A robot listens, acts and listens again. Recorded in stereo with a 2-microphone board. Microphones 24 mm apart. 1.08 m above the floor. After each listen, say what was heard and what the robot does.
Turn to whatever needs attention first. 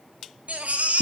Turn 90° right.
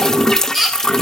So it is at 15° right. Turn 15° right.
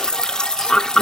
Keep listening.
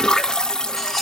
Keep listening.
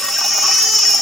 Found it: a baby crying, straight ahead.